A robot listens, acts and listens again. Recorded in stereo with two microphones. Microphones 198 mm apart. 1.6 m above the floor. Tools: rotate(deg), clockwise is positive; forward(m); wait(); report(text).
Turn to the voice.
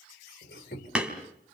wait()
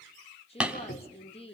rotate(-30)
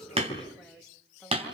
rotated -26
report("Found it: a woman speaking, straight ahead, 2 to 4 m away.")